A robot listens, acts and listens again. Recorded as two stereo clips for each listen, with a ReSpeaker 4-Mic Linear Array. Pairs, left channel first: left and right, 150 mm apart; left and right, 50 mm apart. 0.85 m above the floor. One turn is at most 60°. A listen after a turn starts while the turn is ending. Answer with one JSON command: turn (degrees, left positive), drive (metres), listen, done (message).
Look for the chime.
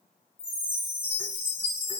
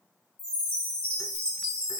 {"turn": 30}
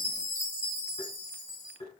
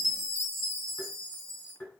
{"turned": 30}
{"turn": -10}
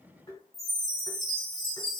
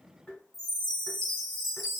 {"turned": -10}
{"done": "Facing the chime."}